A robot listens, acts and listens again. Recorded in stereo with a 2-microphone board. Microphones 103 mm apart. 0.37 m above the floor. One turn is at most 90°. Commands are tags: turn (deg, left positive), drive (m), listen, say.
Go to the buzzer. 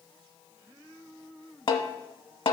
<listen/>
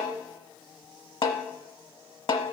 <listen/>
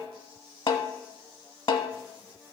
<say>I can't make out a buzzer, only a snare drum.</say>